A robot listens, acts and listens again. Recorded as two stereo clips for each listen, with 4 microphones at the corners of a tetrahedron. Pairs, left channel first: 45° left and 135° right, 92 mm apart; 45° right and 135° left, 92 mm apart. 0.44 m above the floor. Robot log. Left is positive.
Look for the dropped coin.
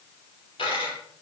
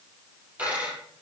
note: The dropped coin: 65° left.
cmd yaw +65
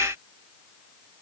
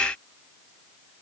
end: I heard a dropped coin from this way, but can't make it out now.